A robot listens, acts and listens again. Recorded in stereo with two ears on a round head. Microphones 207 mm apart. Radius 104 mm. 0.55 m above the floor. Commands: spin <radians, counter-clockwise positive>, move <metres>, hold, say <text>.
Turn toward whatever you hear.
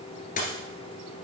spin 0.61
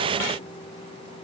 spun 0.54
hold
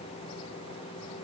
say I heard a dropped coin, but can't make it out now. It was about 5° left or 115° left.